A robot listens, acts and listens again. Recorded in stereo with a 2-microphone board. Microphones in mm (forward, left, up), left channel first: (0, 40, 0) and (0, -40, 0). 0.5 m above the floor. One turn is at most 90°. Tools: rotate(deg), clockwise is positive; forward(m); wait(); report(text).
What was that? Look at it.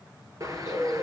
rotate(45)
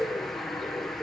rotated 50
report("Found it: a bird, straight ahead, 1 to 2 m away.")